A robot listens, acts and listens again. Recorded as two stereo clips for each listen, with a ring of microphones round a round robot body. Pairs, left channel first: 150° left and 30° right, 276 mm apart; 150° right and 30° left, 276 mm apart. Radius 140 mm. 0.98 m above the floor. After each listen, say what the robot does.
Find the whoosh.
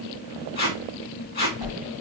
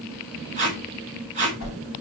Turn 105° right.
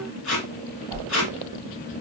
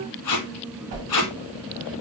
Found it: a whoosh, straight ahead, 1 to 2 m away.